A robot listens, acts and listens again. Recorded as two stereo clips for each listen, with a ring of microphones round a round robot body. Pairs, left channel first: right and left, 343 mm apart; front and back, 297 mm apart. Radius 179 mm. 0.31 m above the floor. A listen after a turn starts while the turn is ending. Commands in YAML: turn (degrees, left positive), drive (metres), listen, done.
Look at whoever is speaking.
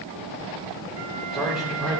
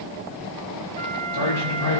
done: "Facing the man speaking."